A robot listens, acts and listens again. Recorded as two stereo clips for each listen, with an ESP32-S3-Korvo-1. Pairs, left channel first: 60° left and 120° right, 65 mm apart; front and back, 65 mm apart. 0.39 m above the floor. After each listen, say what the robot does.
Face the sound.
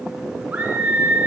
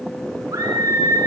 Turn 175° left.
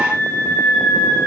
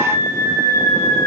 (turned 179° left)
Found it: a scream, straight ahead.